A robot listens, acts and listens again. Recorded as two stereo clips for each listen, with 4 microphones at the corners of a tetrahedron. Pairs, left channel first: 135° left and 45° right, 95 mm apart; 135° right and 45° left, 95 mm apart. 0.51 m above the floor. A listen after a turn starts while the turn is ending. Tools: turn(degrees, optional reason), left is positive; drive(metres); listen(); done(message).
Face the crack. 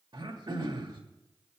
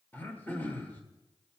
listen()
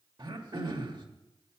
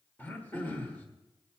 listen()
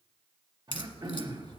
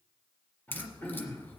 turn(degrees=155, reason="The crack: 155° left.")
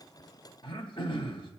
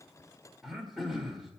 done("I heard a crack from this way, but can't make it out now.")